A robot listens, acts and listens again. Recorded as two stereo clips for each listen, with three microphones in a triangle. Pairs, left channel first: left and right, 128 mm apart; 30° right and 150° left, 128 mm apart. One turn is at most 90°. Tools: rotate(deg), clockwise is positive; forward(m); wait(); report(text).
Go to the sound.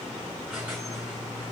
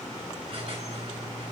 rotate(90)
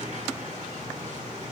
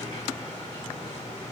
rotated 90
rotate(80)
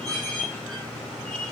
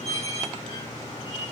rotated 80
forward(1.0)
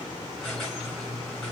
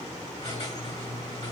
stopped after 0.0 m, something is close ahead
report("Blocked. The squeak is further on, straight ahead.")